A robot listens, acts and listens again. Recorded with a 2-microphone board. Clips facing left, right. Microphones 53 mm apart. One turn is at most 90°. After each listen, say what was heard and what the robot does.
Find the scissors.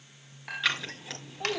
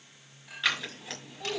Turn 30° left.
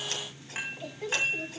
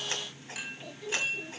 Keep listening.
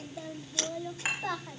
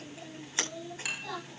So it is at 30° right. Turn 30° right.
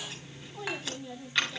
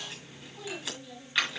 Facing the scissors.